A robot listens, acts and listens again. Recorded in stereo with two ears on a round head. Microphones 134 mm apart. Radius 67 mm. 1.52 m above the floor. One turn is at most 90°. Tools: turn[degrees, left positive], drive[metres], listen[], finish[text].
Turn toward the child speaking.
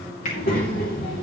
Thought: The child speaking: about 65° left or 115° left.
Action: turn[65]
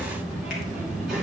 Action: finish[Facing the child speaking.]